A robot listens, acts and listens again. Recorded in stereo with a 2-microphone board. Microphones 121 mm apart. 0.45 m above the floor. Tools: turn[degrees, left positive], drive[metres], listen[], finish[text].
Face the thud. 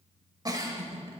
Action: listen[]
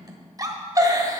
Action: listen[]
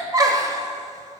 Action: finish[I can't make out a thud to turn to.]